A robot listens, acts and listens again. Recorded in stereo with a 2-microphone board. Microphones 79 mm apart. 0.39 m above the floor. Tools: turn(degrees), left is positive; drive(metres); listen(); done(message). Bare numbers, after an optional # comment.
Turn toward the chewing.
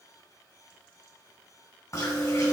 # The chewing: about 50° left or 130° left.
turn(50)
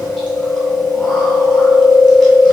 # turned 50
# So it is at 10° left.
turn(10)
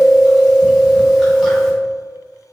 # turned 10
done("Facing the chewing, 1 to 2 m away.")